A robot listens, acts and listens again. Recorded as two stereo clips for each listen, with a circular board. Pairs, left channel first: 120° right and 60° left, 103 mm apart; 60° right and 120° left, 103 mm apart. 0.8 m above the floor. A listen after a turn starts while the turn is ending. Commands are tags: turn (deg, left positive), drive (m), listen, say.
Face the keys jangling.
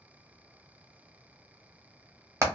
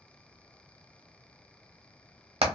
<listen/>
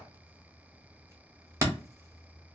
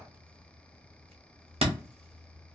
<listen/>
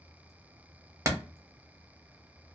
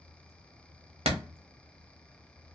<say>I can't make out keys jangling, only hammering.</say>